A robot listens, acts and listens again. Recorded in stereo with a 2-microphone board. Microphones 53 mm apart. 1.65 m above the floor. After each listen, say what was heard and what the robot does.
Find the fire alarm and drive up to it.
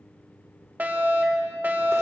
The fire alarm: about 40° right or 140° right. Turn 40° right.
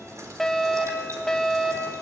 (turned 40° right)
Drive 1.0 m forward.
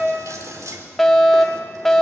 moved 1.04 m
Drive 1.0 m forward.
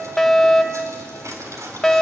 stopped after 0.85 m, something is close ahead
I am next to the fire alarm.